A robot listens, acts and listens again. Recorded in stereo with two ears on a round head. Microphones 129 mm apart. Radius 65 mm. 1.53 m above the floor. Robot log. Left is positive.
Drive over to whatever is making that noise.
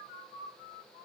cmd idle
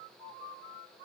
cmd idle
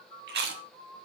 cmd yaw -90
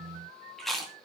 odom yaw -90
cmd fwd 1.0
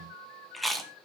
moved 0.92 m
cmd fwd 1.0
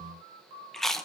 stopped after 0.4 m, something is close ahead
end: Arrived at the chewing, straight ahead.